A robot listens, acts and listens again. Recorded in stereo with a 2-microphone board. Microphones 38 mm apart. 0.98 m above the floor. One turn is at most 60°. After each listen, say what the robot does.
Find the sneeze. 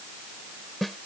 Keep listening.
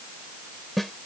Keep listening.
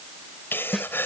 Turn 60° left.
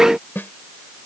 Keep listening.
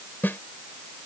I heard a sneeze, but can't make it out now. It was about 10° left or 50° left.